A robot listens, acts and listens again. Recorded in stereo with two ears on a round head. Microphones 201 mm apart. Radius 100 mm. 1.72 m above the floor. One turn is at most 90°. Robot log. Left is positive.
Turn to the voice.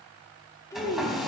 cmd yaw +30
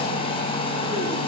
cmd idle
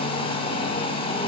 cmd idle
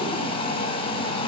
end: I heard a child speaking, but can't make it out now. It was about 15° right or 135° left.